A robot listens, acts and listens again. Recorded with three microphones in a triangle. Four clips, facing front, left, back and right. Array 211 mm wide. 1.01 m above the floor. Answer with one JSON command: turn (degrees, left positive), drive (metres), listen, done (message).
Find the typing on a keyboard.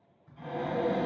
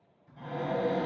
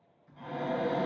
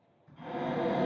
{"done": "Facing the typing on a keyboard, 1 to 2 m away."}